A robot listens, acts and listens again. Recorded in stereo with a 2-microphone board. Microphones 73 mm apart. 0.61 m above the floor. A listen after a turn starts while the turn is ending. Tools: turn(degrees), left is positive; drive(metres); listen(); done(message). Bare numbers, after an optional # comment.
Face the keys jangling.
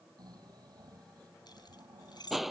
turn(90)
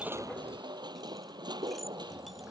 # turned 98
# Nothing new. It was at 10° right.
turn(-10)
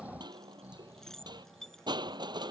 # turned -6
done("Facing the keys jangling.")